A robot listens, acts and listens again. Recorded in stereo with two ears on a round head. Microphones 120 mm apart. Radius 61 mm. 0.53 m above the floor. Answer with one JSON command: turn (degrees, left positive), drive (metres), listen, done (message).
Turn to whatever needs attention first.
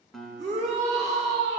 {"turn": -55}
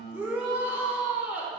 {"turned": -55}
{"turn": -15}
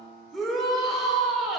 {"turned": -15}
{"done": "Facing the shout."}